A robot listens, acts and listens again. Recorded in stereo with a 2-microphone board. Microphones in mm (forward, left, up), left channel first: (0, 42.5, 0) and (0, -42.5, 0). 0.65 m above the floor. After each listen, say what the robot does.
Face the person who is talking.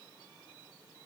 Keep listening.
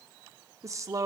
Turn 40° right.
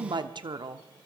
Turn 95° right.
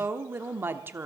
Turn 30° right.
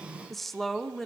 Found it: a woman speaking, straight ahead.